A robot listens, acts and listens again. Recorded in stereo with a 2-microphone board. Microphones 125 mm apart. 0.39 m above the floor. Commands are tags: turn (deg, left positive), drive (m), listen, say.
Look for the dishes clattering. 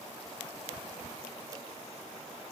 <listen/>
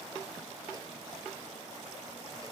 <listen/>
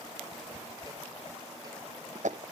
<turn deg="-75"/>
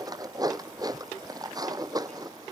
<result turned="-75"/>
<turn deg="-30"/>
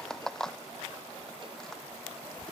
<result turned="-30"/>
<say>Found it: dishes clattering, straight ahead.</say>